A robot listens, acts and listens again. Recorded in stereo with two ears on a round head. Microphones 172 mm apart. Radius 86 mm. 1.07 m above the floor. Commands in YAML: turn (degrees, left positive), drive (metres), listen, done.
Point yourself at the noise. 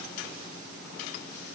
listen: true
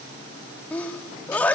turn: 30
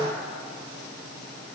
listen: true
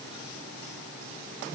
done: "I heard a sneeze, but can't make it out now. It was about 20° right or 140° left."